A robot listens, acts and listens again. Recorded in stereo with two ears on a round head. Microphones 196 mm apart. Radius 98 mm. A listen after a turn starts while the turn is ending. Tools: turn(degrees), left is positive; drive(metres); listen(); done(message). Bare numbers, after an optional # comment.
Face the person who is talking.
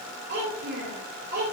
# The child speaking: about 50° right or 130° right.
turn(-50)
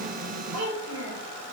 # So it is at 85° right.
turn(-85)
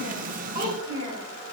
# The child speaking is now 25° right.
turn(-25)
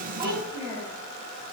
# The child speaking is now 10° right.
turn(-10)
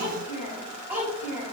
done("Found it: a child speaking, straight ahead, over 4 m away.")